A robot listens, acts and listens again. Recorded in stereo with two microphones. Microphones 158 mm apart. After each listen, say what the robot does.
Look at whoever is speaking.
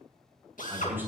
Turn 30° right.
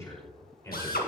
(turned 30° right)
Turn 20° left.
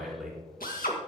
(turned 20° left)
Facing the man speaking.